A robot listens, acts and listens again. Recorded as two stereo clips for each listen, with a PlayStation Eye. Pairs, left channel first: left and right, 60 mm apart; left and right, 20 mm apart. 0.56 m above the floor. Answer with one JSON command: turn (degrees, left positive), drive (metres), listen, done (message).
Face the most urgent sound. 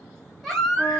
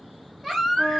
{"turn": 30}
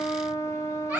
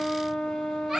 {"turn": -25}
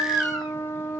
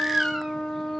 {"done": "Found it: a baby crying, straight ahead, 1 to 2 m away."}